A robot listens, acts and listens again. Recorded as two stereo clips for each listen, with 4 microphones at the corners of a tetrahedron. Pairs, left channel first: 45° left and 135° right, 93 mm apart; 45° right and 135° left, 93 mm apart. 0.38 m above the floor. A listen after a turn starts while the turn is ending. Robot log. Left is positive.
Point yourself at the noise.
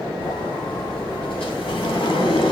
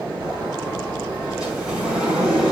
note: The sliding door: 55° left.
cmd yaw +55
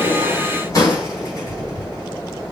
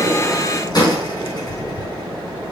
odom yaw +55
end: Facing the sliding door.